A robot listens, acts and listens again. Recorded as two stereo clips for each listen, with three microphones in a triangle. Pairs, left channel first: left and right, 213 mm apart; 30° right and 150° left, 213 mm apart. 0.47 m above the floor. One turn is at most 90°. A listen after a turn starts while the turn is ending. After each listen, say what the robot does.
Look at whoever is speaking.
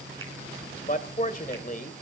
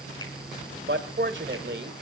Turn 90° left.
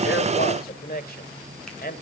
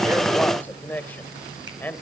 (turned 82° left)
Turn 50° left.
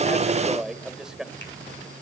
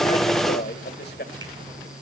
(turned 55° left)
Facing the man speaking, 1 to 2 m away.